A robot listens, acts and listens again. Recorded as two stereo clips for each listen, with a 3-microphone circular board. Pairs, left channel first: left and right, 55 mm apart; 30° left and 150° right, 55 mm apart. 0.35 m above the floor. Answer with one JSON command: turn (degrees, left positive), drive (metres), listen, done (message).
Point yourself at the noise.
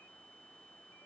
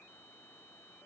{"listen": true}
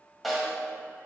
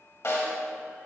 {"done": "Facing the snare drum."}